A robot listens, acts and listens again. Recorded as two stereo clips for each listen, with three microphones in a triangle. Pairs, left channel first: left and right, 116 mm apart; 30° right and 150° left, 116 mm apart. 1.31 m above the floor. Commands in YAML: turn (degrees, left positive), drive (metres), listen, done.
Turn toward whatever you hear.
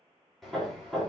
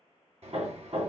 turn: 180
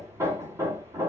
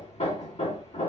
turn: -25
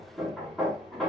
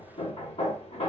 done: "Facing the hammering, 2 to 4 m away."